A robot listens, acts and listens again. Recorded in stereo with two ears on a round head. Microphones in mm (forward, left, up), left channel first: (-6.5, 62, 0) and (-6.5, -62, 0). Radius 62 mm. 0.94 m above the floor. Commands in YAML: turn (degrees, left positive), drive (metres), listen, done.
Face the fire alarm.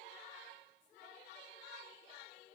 listen: true
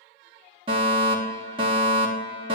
turn: -40
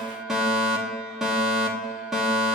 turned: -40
done: "Facing the fire alarm, 2 to 4 m away."